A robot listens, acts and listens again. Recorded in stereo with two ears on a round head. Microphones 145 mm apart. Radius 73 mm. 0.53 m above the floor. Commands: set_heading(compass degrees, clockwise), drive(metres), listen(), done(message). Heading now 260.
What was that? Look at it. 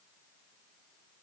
listen()
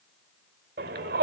set_heading(325)
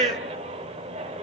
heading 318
set_heading(358)
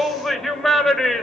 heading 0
done("Facing the shout.")